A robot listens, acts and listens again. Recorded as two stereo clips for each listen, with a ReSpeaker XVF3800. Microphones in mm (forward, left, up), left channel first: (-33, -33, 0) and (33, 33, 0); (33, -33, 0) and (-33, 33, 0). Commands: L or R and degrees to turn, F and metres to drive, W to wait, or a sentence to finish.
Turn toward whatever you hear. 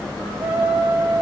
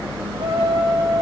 L120
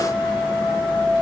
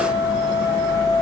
R35
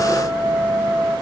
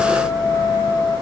Found it: a trumpet, straight ahead, over 4 m away.